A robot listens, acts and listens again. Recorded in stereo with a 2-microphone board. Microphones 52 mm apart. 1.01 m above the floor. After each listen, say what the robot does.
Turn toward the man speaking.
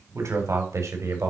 Turn 90° right.
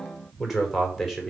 Facing the man speaking, 2 to 4 m away.